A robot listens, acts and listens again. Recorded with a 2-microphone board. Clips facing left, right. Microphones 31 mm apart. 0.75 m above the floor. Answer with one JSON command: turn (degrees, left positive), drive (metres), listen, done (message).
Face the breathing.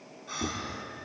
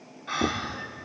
{"turn": -45}
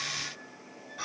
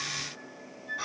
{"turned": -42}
{"done": "Found it: breathing, straight ahead, 1 to 2 m away."}